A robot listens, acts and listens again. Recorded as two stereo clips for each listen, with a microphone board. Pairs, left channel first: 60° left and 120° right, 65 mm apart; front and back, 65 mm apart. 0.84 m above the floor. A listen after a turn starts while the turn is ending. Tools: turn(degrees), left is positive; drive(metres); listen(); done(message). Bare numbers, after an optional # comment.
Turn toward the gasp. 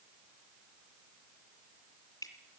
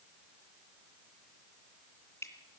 listen()
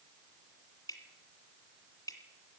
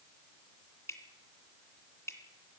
listen()
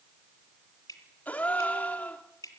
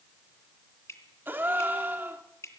# The gasp: 125° left.
turn(125)
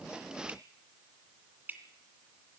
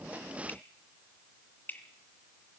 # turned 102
# Nothing new. It was at 25° left.
turn(25)
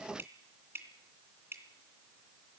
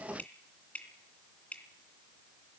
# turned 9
# Nothing new. It was at 15° left.
turn(15)
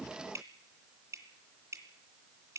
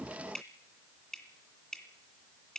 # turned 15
done("Facing where the gasp came from. I can't hear it now.")